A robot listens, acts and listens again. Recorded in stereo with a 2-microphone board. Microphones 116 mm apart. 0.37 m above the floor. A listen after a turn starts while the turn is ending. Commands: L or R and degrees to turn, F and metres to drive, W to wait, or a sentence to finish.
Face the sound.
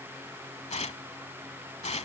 L90
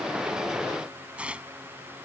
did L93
R10
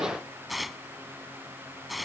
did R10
Facing the tearing paper.